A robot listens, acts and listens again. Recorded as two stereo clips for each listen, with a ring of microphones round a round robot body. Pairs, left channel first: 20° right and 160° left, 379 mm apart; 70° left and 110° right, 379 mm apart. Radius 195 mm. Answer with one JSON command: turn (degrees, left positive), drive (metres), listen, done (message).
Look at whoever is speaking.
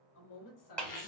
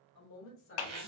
{"turn": 10}
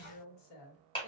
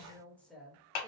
{"turn": -25}
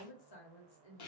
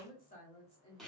{"turn": -10}
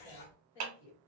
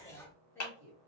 {"turn": -20}
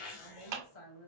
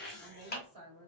{"turn": -15}
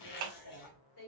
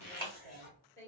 {"done": "Facing the woman speaking."}